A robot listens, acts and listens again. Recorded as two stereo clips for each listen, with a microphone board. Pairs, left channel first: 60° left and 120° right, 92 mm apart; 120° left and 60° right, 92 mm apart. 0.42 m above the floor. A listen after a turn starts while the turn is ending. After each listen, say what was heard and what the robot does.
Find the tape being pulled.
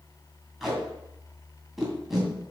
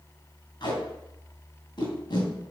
The tape being pulled: 150° left. Turn 150° left.
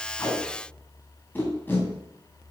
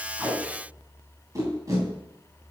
The tape being pulled is now 10° right. Turn 10° right.
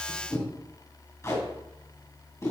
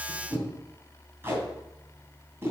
Facing the tape being pulled, 2 to 4 m away.